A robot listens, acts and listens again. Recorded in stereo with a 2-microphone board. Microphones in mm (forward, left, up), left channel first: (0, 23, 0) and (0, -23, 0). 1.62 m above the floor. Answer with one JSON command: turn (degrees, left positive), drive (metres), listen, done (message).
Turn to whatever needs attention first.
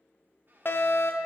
{"turn": 55}
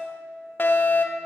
{"turn": 55}
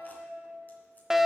{"turn": -15}
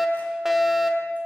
{"turn": -10}
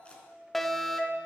{"done": "Found it: a fire alarm, straight ahead."}